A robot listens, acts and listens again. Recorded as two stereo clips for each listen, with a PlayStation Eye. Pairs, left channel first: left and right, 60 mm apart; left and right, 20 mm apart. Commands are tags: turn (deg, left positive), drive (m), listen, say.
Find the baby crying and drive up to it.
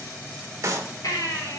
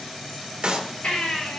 <turn deg="90"/>
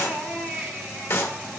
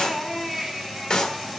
<drive m="1.0"/>
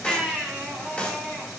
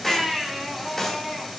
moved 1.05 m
<turn deg="10"/>
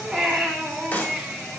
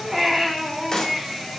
<drive m="1.0"/>
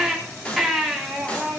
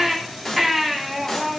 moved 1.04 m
<drive m="1.0"/>
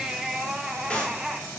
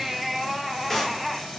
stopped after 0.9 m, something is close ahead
<turn deg="-10"/>
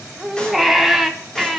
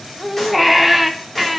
<say>Arrived at the baby crying, straight ahead.</say>